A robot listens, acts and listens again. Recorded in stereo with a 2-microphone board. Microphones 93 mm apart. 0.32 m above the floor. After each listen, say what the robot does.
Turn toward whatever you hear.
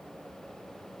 Keep listening.
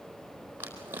Turn 25° right.
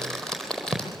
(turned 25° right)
Found it: crumpling, straight ahead, over 4 m away.